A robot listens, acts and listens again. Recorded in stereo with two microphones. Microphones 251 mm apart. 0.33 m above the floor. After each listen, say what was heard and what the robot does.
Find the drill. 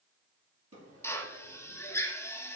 Turn 30° left.
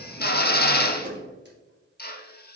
So it is at 140° left. Turn 140° left.
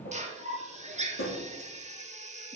The drill is now 30° right. Turn 30° right.
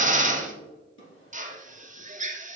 The drill is now 30° right. Turn 30° right.
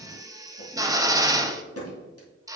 The drill is now 15° right. Turn 15° right.
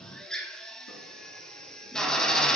Found it: a drill, straight ahead.